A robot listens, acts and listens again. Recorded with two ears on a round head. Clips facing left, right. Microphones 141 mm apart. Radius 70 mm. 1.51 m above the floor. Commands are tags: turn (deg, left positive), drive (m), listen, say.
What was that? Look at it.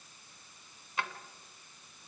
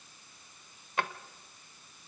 <turn deg="-40"/>
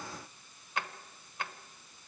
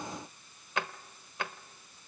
<turn deg="-90"/>
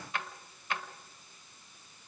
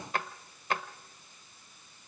<turn deg="-40"/>
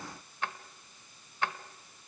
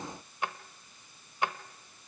<turn deg="-15"/>
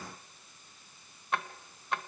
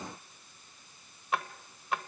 <say>Facing the drawer.</say>